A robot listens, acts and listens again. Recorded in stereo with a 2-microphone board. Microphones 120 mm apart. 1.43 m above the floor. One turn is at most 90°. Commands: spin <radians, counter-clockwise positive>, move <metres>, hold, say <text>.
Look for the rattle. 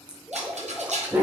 spin -1.22
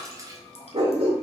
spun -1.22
hold
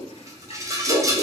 spin -0.52
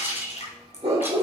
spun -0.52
spin -0.35
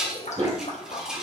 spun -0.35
say Found it: a rattle, straight ahead, under 1 m away.